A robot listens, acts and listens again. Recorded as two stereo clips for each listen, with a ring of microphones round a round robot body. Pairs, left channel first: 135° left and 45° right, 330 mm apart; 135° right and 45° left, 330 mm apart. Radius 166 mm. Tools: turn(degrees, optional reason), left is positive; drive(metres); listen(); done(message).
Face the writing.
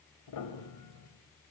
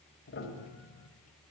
listen()
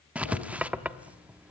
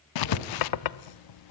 turn(degrees=-130, reason="The writing: 130° right.")
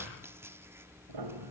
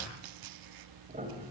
listen()
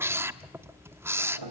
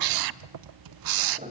turn(degrees=35, reason="The writing is now 35° left.")
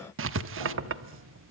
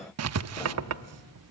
done("Found it: writing, straight ahead.")